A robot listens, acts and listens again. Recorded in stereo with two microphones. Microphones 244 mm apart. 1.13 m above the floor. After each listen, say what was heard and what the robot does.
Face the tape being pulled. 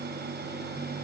Keep listening.
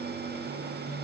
Keep listening.
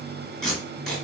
Turn 30° left.
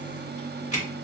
So it is at 145° left. Turn 145° left.
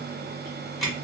Facing the tape being pulled.